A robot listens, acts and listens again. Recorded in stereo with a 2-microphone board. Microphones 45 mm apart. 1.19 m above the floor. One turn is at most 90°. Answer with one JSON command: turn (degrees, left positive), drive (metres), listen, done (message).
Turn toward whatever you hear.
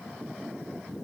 {"listen": true}
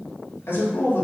{"turn": 60}
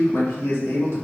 {"turn": 80}
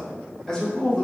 {"turn": 20}
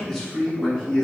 {"turn": 10}
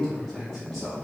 {"done": "Facing the man speaking, 2 to 4 m away."}